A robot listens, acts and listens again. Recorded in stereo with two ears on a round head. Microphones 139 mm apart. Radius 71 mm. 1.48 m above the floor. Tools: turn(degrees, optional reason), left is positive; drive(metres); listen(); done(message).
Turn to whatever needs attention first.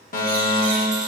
turn(degrees=60, reason="The fire alarm: about 60° left or 120° left.")
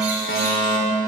turn(degrees=60, reason="So it is at 60° left.")
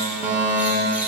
turn(degrees=-10, reason="The fire alarm is now 10° right.")
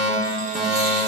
done("Found it: a fire alarm, straight ahead, 2 to 4 m away.")